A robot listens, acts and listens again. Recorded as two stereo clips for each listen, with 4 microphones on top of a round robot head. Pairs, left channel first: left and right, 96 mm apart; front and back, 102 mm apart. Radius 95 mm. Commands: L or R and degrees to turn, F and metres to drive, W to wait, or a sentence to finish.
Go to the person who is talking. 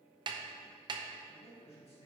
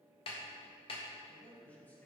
L75
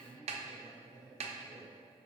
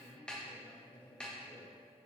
L40
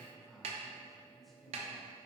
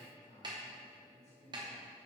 F1.0
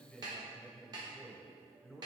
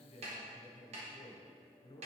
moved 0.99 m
F1.0
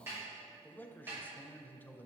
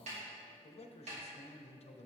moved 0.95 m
L15
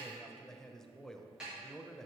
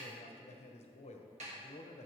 F1.0
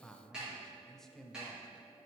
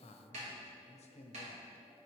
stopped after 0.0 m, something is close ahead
Arrived at the man speaking, straight ahead.